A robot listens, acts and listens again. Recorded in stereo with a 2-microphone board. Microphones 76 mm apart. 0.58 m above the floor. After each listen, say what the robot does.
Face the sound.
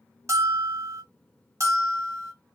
Turn 40° right.
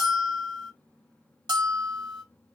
Turn 100° right.
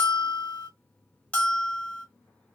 Turn 15° left.
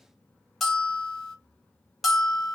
Facing the bell.